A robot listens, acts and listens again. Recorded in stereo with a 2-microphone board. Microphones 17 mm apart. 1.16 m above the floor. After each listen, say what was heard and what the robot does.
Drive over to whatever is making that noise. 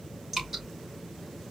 The dripping: about 25° right or 155° right. Turn 25° right.
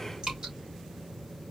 So it is at 130° right. Turn 130° right.
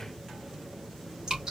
The dripping is now 30° right. Turn 30° right.
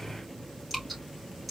Drive 1.0 m forward.
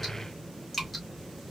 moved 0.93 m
The dripping is now 10° left. Turn 10° left.
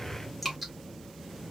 Drive 1.0 m forward.
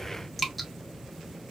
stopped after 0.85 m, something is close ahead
I am next to the dripping.